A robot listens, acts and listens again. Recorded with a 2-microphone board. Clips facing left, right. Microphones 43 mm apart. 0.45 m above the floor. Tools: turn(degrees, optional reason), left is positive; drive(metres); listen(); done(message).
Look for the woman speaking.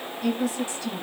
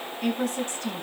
turn(degrees=-50, reason="The woman speaking: about 50° right or 130° right.")
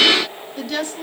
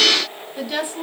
turn(degrees=-15, reason="So it is at 15° right.")
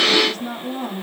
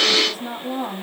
turn(degrees=-15, reason="The woman speaking is now 15° right.")
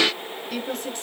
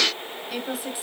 done("Found it: a woman speaking, straight ahead.")